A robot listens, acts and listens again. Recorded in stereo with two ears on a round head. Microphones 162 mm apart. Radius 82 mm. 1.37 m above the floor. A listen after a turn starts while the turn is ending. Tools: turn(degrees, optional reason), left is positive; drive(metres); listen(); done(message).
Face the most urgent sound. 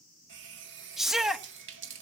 turn(degrees=30)
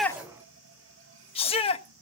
turn(degrees=150, reason="So it is at 150° left.")
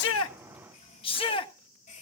turn(degrees=30, reason="The shout is now 30° left.")
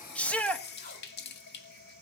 done("Facing the shout.")